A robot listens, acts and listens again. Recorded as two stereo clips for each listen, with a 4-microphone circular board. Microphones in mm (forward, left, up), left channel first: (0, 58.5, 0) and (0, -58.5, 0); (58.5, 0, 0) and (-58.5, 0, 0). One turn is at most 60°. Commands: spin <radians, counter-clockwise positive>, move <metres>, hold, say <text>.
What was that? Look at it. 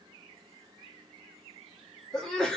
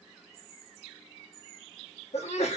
say Facing the sneeze.